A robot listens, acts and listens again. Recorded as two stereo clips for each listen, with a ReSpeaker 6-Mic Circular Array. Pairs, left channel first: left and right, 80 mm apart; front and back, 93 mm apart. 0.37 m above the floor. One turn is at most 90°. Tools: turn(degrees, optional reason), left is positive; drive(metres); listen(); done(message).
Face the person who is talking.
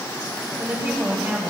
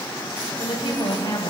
turn(degrees=-20, reason="The woman speaking: 20° right.")
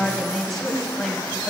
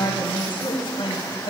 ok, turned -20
done("Facing the woman speaking, 2 to 4 m away.")